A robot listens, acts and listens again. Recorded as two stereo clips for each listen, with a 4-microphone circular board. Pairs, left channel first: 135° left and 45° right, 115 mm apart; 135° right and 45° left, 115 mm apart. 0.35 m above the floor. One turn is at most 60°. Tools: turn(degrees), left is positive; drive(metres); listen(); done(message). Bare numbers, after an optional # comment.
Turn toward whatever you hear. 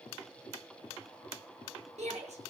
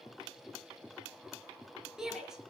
# The shout: 40° right.
turn(-40)
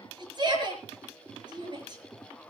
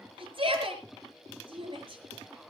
done("Found it: a shout, straight ahead, over 4 m away.")